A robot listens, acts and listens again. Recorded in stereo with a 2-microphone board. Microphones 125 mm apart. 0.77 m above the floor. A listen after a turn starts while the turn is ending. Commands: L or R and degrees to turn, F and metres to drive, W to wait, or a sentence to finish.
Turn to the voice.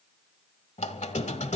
W
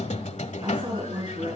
R40
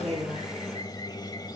W
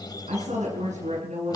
R100
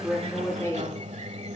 L15
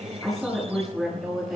Found it: a woman speaking, straight ahead, over 4 m away.